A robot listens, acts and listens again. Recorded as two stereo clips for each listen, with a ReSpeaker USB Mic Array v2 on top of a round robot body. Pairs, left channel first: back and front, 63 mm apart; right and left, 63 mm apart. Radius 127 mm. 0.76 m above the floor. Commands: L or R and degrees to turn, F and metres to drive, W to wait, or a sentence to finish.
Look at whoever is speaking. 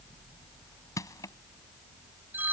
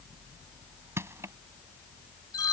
W
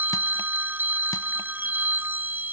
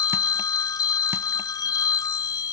W
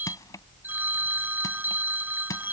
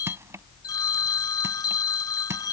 I can't make out anyone speaking to turn to.